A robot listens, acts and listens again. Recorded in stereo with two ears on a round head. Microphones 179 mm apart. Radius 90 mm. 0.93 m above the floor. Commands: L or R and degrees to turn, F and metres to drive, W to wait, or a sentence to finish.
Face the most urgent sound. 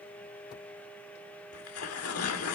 W
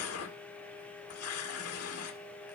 W
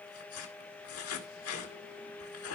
I can't make out anything urgent, only tearing paper.